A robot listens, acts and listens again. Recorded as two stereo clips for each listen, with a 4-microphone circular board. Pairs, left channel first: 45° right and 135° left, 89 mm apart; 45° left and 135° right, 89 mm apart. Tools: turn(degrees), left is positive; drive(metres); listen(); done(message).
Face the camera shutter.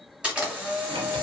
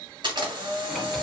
turn(degrees=-145)
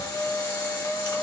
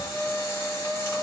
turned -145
turn(degrees=-10)
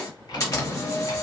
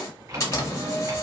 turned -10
done("Facing the camera shutter.")